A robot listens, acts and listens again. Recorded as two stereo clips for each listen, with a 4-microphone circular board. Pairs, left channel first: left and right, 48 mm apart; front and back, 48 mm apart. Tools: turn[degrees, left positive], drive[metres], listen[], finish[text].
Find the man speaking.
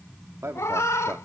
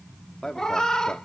Thought: The man speaking: 60° right.
Action: turn[-60]
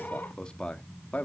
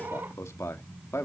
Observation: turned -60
Thought: The man speaking is now 30° left.
Action: turn[30]
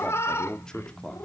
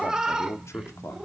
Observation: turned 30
Thought: The man speaking is now 15° left.
Action: turn[15]
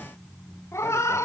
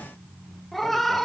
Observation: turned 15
Action: listen[]
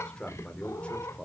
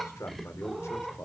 Thought: The man speaking is now 25° left.
Action: turn[25]
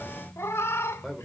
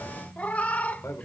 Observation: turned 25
Action: finish[Found it: a man speaking, straight ahead, 2 to 4 m away.]